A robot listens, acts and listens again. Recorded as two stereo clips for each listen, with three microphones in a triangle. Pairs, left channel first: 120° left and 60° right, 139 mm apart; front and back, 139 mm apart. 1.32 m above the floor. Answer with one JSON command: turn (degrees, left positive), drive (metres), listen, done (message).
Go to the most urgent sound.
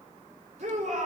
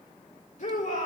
{"turn": -25}
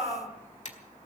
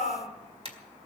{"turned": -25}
{"turn": -10}
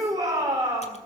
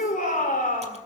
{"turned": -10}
{"drive": 1.0}
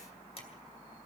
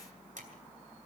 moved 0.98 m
{"listen": true}
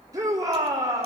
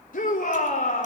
{"drive": 1.0}
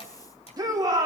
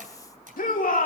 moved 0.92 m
{"drive": 1.0}
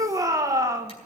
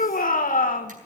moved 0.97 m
{"drive": 1.0}
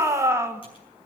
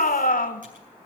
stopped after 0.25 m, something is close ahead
{"turn": 10}
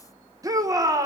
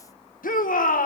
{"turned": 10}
{"done": "Arrived at the shout, straight ahead."}